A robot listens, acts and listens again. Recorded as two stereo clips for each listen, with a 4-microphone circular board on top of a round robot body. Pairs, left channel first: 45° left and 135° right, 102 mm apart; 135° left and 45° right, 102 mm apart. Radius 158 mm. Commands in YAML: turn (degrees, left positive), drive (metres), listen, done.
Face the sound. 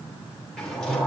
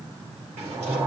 turn: -40
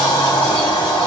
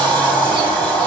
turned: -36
done: "Found it: a sliding door, straight ahead."